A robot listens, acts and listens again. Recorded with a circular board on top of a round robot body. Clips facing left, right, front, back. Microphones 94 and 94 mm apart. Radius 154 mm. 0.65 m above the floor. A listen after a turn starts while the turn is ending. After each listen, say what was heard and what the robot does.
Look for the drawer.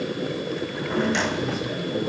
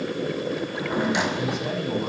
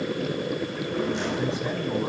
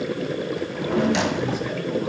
The drawer: 170° right. Turn 170° right.
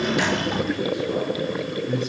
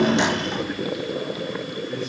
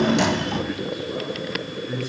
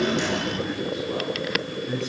The drawer is now 10° left. Turn 10° left.
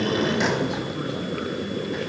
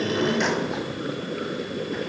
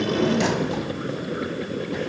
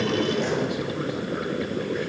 Keep listening.
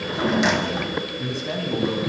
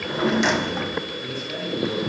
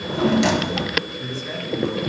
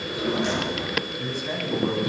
Facing the drawer, 2 to 4 m away.